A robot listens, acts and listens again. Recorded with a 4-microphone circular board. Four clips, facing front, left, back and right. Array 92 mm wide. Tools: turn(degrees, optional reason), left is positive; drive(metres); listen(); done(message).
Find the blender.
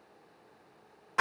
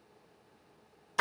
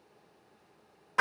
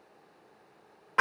listen()
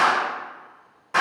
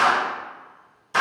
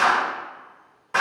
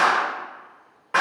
listen()
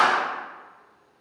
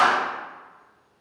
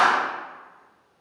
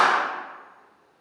done("I can't make out a blender, only a clap.")